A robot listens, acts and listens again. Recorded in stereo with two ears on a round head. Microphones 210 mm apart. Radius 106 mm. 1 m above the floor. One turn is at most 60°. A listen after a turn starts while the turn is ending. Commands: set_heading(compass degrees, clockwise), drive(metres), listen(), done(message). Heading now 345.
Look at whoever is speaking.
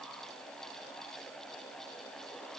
listen()
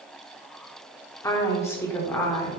set_heading(315)
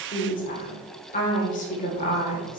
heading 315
set_heading(255)
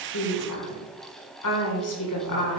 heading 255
set_heading(195)
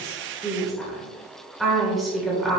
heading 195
done("Found it: a woman speaking, straight ahead, 2 to 4 m away.")